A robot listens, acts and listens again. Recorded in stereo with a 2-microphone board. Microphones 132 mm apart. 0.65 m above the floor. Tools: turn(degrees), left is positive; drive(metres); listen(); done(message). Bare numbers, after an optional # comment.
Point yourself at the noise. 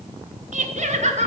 # The laughter: about 55° right or 125° right.
turn(-55)
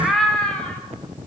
# So it is at 10° left.
turn(10)
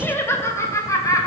# The laughter is now 25° left.
turn(25)
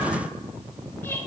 # The laughter is now 15° left.
turn(15)
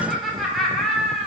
done("Facing the laughter.")